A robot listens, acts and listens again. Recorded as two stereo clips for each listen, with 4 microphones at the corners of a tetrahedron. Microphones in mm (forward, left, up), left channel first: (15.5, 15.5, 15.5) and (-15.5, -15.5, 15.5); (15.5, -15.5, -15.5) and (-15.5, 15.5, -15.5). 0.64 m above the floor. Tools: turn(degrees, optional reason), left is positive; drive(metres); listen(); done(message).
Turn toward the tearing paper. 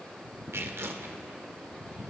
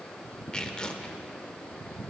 turn(degrees=-120, reason="The tearing paper: 120° right.")
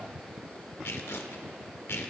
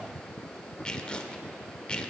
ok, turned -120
turn(degrees=20, reason="The tearing paper is now 20° left.")
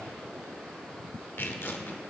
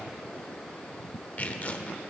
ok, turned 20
turn(degrees=10, reason="The tearing paper is now 10° left.")
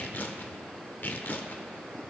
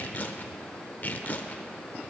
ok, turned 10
done("Found it: tearing paper, straight ahead.")